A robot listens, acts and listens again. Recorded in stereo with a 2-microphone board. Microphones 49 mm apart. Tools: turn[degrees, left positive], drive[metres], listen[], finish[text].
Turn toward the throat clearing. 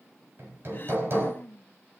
Thought: The throat clearing: about 40° left or 140° left.
Action: turn[40]
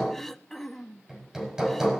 Action: finish[Facing the throat clearing.]